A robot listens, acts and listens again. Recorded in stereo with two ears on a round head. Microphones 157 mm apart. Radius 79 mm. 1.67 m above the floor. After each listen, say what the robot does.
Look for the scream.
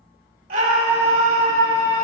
Turn 50° right.
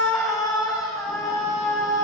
Found it: a scream, straight ahead, over 4 m away.